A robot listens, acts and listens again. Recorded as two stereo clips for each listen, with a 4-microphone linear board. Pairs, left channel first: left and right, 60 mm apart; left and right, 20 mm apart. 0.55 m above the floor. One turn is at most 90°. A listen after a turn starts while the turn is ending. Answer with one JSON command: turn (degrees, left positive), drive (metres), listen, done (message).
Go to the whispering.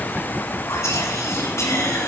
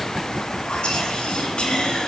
{"turn": 60}
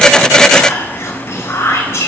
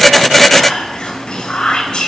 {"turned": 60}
{"turn": 50}
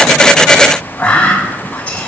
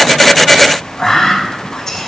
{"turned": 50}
{"turn": 20}
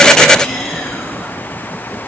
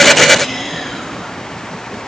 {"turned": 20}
{"drive": 1.0}
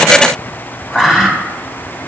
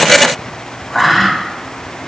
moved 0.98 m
{"drive": 1.0}
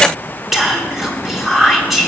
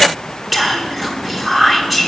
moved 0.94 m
{"drive": 1.0}
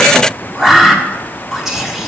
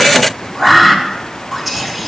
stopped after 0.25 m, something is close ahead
{"turn": -10}
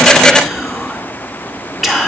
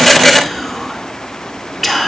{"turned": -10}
{"done": "I am next to the whispering."}